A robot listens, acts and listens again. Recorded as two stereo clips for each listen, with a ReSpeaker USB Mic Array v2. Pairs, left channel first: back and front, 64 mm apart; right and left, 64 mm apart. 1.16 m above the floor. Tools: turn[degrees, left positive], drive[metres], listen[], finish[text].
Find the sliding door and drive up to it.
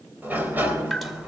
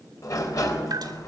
Thought: The sliding door: 60° right.
Action: turn[-60]
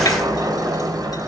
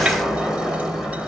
Thought: The sliding door is now 10° left.
Action: turn[10]
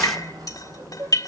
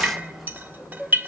Action: drive[1.0]
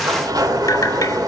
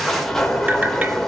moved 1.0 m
Action: drive[1.0]
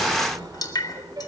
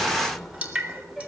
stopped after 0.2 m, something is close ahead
Action: finish[Something is in my way. I am facing the sliding door but have not reached it.]